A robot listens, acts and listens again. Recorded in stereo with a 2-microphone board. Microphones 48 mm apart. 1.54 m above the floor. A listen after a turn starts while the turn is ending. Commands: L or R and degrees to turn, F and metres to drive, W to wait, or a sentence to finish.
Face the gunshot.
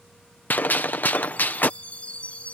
L40
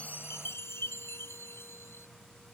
W
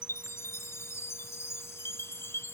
I heard a gunshot, but can't make it out now. It was about straight ahead or 100° left.